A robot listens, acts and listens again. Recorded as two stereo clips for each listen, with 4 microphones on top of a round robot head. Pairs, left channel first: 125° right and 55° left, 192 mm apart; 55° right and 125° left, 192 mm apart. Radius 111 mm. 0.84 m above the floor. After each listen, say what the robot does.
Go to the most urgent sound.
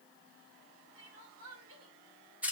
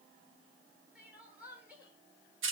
Turn 45° left.
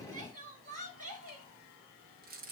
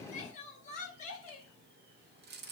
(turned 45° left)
Drive 1.0 m forward.
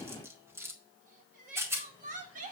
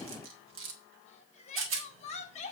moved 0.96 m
Drive 1.0 m forward.
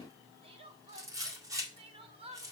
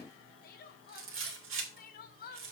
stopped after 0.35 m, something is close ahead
Turn 10° right.
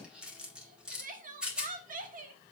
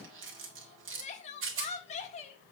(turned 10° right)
I am next to the crying.